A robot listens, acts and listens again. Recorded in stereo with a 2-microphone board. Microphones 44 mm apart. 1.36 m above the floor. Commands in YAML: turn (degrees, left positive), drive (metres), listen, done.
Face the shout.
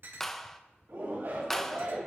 turn: -70
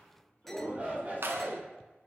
turn: -40
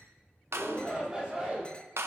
turn: -20
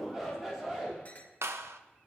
turn: -10
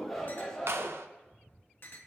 done: "Found it: a shout, straight ahead, 2 to 4 m away."